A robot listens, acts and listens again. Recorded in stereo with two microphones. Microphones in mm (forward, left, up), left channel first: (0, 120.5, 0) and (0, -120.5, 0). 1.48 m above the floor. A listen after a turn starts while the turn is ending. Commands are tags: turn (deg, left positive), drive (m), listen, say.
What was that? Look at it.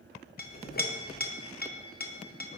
<turn deg="40"/>
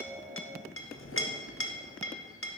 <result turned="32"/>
<turn deg="100"/>
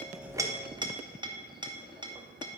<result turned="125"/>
<turn deg="-20"/>
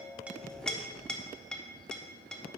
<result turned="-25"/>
<say>Found it: a clink, straight ahead.</say>